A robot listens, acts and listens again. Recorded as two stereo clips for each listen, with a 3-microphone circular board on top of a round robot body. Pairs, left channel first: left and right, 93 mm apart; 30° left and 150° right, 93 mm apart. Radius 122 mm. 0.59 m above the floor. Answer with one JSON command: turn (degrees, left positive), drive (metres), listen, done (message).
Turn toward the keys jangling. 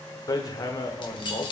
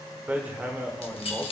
{"turn": 50}
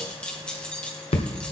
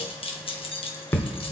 {"turn": 10}
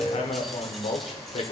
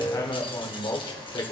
{"listen": true}
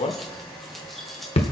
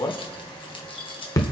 {"done": "Found it: keys jangling, straight ahead."}